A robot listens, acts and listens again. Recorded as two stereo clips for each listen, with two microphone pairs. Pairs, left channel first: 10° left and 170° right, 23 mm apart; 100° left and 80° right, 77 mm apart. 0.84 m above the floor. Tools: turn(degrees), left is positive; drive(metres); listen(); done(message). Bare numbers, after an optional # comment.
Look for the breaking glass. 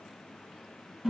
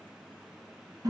listen()
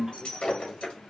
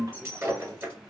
# The breaking glass: 25° right.
turn(-25)
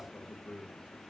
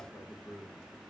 done("Facing where the breaking glass came from. I can't hear it now.")